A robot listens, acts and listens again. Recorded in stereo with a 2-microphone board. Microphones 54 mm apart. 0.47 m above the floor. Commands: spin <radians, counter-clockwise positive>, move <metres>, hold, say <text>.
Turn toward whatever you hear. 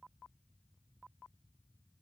hold
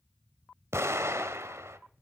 spin -0.96
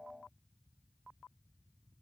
hold
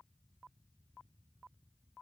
say I heard an explosion, but can't make it out now. It was about straight ahead or 70° right.